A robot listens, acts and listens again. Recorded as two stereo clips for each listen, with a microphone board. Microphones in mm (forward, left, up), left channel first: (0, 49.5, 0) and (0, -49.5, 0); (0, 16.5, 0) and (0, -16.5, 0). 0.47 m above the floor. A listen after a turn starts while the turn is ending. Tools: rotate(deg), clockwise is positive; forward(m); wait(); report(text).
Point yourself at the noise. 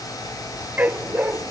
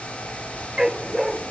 rotate(15)
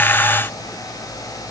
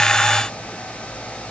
wait()
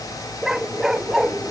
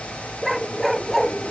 report("Facing the dog barking.")